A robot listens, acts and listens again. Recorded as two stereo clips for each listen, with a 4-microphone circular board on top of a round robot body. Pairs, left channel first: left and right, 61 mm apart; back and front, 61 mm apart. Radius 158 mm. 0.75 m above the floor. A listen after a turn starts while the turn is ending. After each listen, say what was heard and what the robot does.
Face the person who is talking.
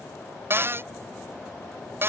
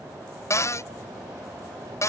Keep listening.
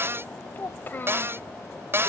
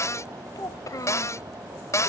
The child speaking: 150° left. Turn 150° left.
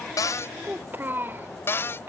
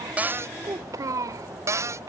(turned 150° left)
The child speaking is now 30° right. Turn 30° right.
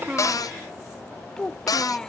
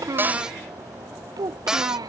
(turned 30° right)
The child speaking is now 10° left. Turn 10° left.
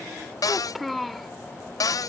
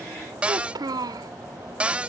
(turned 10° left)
Facing the child speaking.